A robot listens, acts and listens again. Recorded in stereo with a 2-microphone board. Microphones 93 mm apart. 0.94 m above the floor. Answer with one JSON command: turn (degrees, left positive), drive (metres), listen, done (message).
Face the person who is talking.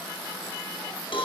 {"listen": true}
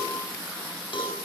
{"listen": true}
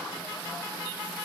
{"done": "I can't make out anyone speaking, only a cowbell."}